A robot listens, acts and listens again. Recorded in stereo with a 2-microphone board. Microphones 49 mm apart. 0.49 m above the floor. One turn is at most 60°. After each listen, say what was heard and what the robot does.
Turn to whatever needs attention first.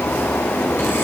Keep listening.
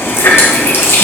Keep listening.
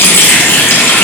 I can't make out anything urgent to turn to.